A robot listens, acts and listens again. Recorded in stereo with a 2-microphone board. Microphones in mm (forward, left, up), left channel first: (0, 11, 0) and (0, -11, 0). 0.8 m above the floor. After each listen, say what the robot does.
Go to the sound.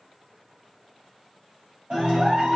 Turn 65° right.
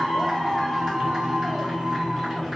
Drive 1.0 m forward.
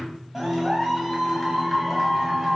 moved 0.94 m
Turn 10° right.
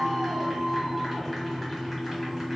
Drive 1.0 m forward.
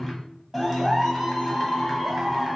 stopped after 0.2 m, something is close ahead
Arrived at the clap, straight ahead.